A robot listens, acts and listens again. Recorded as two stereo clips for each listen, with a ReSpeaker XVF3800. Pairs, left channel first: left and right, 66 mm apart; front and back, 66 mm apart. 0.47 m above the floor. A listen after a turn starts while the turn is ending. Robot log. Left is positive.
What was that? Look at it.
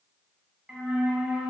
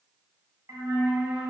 note: The flute: 160° right.
cmd yaw -160
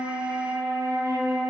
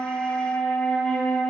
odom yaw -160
note: The flute is now 65° right.
cmd yaw -65
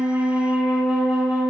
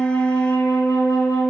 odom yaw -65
note: The flute is now 10° right.
cmd yaw -10
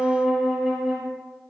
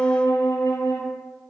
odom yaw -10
end: Found it: a flute, straight ahead, under 1 m away.